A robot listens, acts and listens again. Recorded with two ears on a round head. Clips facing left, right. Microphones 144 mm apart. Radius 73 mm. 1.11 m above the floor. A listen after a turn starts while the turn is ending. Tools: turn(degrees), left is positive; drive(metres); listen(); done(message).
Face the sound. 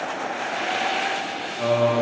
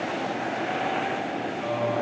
turn(degrees=65)
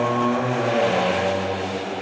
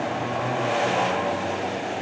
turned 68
turn(degrees=40)
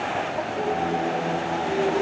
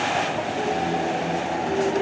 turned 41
done("Facing the singing, under 1 m away.")